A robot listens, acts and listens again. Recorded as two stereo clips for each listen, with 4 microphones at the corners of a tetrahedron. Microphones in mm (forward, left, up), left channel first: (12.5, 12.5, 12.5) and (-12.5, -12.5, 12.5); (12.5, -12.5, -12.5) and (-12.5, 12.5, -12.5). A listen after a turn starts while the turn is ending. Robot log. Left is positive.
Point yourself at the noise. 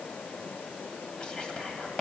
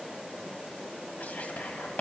note: The whispering: 20° right.
cmd yaw -20
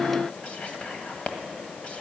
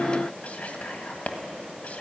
end: Facing the whispering.